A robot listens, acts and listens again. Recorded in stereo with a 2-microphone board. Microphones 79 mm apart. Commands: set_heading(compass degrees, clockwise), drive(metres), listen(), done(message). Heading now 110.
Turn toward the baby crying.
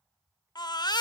set_heading(50)
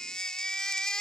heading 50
set_heading(40)
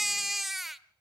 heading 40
done("Found it: a baby crying, straight ahead.")